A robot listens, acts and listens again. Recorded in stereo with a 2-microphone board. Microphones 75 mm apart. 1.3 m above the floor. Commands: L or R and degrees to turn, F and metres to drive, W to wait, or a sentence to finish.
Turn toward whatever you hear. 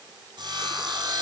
R90
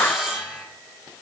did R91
R10
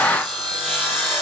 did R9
Facing the sawing, over 4 m away.